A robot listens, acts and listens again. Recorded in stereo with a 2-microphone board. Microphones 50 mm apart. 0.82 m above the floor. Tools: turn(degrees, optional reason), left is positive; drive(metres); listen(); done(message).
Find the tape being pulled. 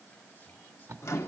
turn(degrees=-60, reason="The tape being pulled: about 60° right or 120° right.")
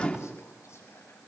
listen()
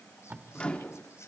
turn(degrees=-45, reason="So it is at 45° right.")
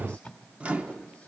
done("Found it: tape being pulled, straight ahead, 1 to 2 m away.")